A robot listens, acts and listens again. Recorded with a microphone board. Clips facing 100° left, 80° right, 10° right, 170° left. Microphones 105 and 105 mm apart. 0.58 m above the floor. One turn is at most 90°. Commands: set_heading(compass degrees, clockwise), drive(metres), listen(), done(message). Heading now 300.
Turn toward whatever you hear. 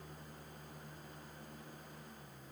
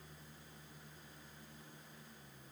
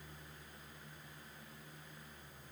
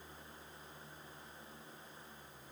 listen()
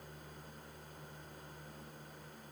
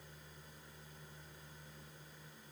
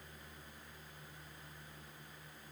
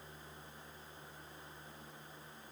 listen()
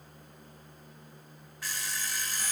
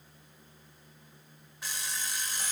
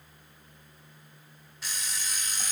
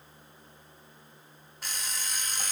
set_heading(30)
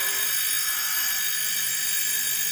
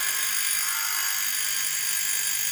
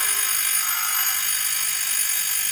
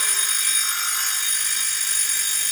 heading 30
set_heading(85)
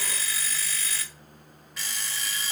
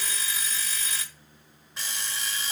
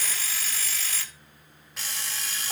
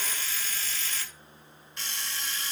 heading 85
set_heading(100)
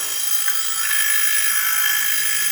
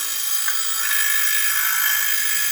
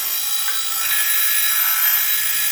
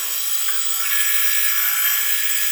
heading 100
done("Found it: an alarm clock, straight ahead, 1 to 2 m away.")